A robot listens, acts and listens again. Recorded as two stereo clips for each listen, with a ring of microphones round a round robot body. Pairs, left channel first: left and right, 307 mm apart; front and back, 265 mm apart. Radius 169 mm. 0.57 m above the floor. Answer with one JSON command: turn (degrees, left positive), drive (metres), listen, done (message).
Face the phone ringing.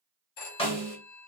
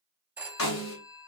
{"turn": 95}
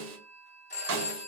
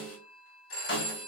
{"turn": 25}
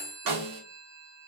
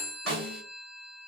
{"turn": -10}
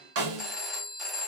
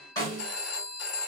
{"done": "Facing the phone ringing."}